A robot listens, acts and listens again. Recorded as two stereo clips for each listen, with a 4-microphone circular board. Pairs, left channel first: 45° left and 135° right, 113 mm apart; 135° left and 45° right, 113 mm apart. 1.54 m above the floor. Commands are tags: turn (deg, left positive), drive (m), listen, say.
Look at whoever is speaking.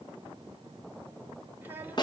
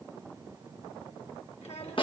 <turn deg="150"/>
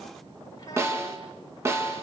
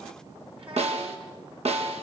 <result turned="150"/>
<turn deg="-10"/>
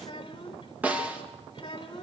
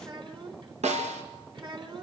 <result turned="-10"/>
<say>Facing the child speaking.</say>